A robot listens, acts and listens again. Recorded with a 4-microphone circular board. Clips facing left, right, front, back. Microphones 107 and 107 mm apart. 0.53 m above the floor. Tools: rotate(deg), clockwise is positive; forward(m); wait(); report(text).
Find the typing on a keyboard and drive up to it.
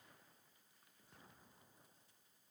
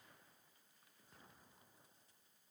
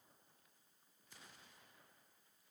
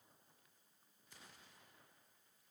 wait()
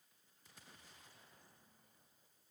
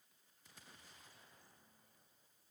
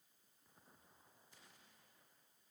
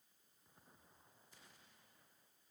wait()
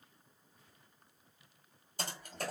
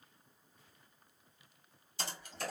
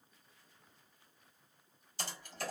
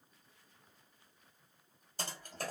rotate(-135)
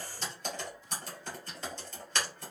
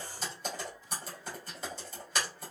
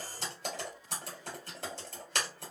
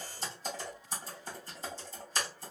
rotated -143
rotate(10)
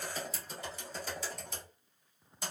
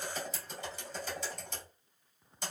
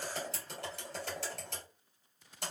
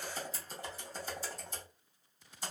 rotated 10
forward(1.0)
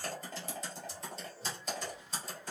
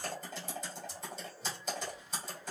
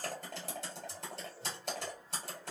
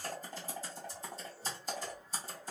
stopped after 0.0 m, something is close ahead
report("Blocked. The typing on a keyboard is further on, straight ahead.")